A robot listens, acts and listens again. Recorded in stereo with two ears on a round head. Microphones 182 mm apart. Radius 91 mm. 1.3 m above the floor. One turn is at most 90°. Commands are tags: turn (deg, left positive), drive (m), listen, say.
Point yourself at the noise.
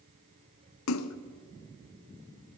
<turn deg="90"/>
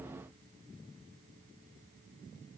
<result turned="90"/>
<say>I heard a splash from this way, but can't make it out now.</say>